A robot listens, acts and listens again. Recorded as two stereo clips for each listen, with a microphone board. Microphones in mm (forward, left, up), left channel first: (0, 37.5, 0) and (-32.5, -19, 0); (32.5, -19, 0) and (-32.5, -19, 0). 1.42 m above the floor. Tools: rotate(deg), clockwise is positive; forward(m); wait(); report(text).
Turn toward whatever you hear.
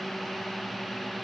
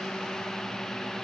wait()
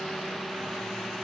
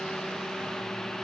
wait()
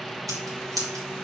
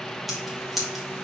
rotate(90)
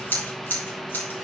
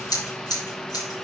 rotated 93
report("Facing the scissors.")